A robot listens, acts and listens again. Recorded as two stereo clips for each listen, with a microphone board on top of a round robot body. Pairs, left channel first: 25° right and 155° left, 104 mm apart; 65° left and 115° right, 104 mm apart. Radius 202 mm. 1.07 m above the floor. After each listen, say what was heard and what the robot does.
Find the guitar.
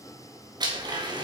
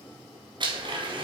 Keep listening.
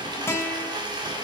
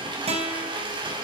The guitar: 90° right. Turn 90° right.
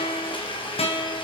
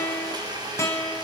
Facing the guitar.